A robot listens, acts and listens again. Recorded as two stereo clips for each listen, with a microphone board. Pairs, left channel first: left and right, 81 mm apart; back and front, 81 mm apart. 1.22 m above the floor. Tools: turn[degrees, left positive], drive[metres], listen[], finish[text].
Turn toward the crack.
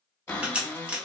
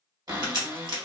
Thought: The crack: 20° right.
Action: turn[-20]
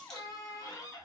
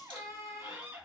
Action: finish[I heard a crack from this way, but can't make it out now.]